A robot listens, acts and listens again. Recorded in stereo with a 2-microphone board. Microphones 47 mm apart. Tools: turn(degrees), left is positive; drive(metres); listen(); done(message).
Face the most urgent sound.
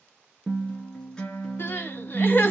turn(degrees=45)
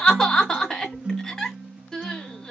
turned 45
turn(degrees=15)
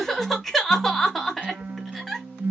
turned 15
done("Facing the crying, 1 to 2 m away.")